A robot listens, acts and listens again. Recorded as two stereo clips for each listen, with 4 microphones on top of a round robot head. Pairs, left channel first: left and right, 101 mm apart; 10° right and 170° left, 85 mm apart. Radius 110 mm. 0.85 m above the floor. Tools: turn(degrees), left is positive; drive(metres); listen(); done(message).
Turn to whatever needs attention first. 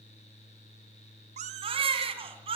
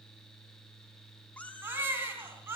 turn(degrees=-120)
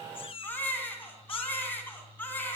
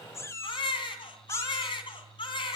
turn(degrees=15)
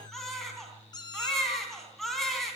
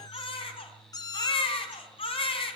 done("Found it: a baby crying, straight ahead.")